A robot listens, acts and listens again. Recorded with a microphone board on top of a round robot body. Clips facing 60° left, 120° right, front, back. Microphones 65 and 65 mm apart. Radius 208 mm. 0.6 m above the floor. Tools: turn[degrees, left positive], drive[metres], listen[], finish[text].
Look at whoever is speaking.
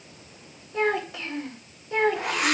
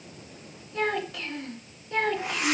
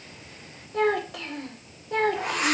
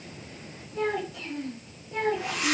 Thought: The child speaking: 15° right.
Action: turn[-15]
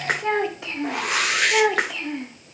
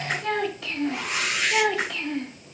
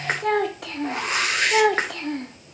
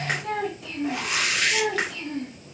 Thought: The child speaking is now 25° right.
Action: turn[-25]
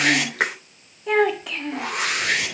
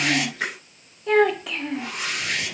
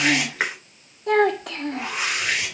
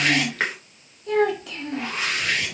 Thought: The child speaking is now 30° right.
Action: turn[-30]
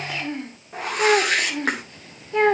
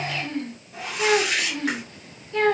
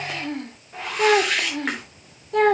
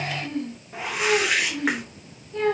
Thought: The child speaking is now 10° right.
Action: turn[-10]
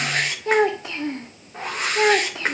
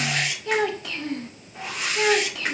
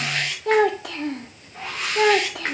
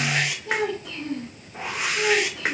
Action: finish[Facing the child speaking.]